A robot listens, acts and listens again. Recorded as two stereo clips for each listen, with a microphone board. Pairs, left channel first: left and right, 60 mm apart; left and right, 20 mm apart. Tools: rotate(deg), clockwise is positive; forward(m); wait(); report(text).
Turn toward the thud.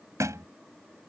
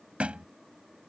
rotate(55)
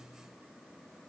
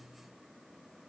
wait()
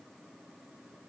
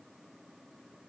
report("I heard a thud, but can't make it out now. It was about straight ahead or 70° right.")